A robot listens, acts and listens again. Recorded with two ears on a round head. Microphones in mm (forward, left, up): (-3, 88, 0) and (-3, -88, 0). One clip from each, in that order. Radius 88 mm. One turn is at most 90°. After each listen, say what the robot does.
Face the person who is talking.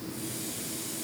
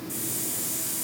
Keep listening.
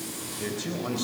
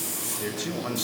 Turn 30° right.
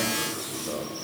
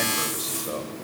Turn 90° right.
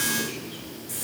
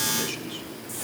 Turn 45° right.
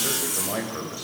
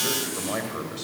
Turn 15° right.
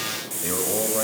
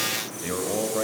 Facing the man speaking.